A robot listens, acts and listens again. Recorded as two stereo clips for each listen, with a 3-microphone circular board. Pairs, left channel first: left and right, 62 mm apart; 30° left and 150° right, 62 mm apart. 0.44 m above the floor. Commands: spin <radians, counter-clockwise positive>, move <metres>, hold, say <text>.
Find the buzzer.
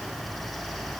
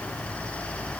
hold
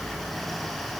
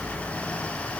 hold
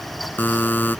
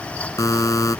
spin 0.61
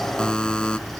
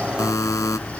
spin 0.26
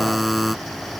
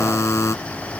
say Found it: a buzzer, straight ahead.